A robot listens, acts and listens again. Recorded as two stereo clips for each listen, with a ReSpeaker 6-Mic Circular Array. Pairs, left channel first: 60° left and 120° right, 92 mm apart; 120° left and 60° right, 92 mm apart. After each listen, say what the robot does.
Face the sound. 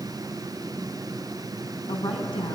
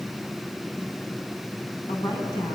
Turn 80° left.
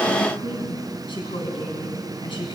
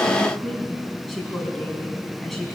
Turn 30° left.
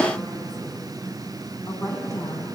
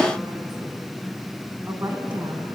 Facing the woman speaking, over 4 m away.